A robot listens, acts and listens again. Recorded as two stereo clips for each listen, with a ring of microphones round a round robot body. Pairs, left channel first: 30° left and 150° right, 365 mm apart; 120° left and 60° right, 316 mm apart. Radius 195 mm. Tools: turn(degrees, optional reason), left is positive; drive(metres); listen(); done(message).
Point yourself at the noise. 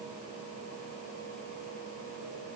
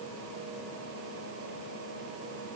listen()
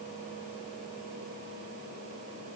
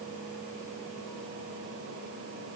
listen()
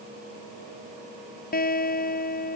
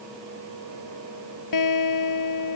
turn(degrees=100, reason="The guitar: 100° left.")
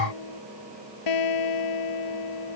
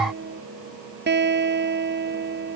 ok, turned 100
done("Facing the guitar.")